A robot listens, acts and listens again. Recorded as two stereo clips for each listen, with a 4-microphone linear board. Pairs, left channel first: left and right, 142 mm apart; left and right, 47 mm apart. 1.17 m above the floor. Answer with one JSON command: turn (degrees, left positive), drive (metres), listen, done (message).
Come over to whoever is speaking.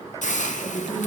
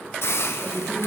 {"turn": 35}
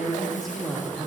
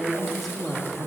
{"drive": 1.0}
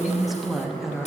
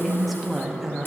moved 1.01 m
{"drive": 1.0}
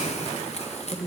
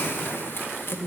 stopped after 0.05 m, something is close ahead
{"done": "I am next to the woman speaking."}